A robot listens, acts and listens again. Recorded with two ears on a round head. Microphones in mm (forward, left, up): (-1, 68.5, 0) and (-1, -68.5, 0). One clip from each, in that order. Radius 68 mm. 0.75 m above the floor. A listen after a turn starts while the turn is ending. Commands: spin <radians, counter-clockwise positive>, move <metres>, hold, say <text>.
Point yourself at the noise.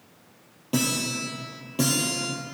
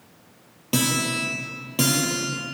spin -0.61
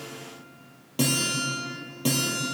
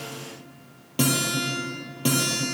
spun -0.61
say Found it: a guitar, straight ahead.